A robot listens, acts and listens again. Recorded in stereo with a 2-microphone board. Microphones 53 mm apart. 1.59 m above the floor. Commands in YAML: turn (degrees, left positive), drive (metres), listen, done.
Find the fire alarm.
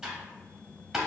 listen: true
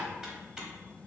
listen: true
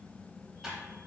done: "I can't make out a fire alarm to turn to."